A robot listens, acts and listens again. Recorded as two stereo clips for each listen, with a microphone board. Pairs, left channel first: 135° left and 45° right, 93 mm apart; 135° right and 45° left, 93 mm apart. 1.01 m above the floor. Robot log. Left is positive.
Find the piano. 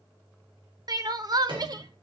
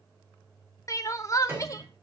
note: The piano: 20° right.
cmd yaw -20
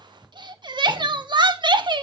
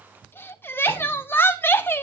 cmd idle
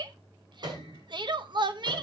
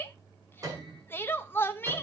end: Facing the piano.